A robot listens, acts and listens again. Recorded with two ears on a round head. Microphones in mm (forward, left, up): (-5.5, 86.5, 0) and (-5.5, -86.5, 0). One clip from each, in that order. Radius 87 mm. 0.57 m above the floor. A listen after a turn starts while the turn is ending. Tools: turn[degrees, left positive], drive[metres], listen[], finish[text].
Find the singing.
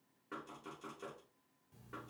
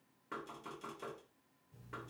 Action: listen[]
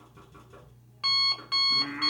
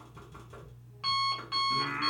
Action: turn[-90]
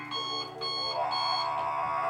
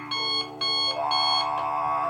Thought: So it is at 10° left.
Action: turn[10]
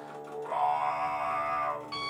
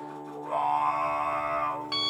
Action: finish[Facing the singing, 1 to 2 m away.]